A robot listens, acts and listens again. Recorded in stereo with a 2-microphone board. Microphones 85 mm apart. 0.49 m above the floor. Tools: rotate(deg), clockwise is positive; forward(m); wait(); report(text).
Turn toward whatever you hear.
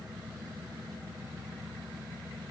wait()
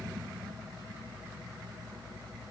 wait()
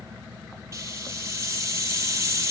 rotate(35)
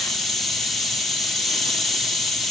report("Facing the hiss.")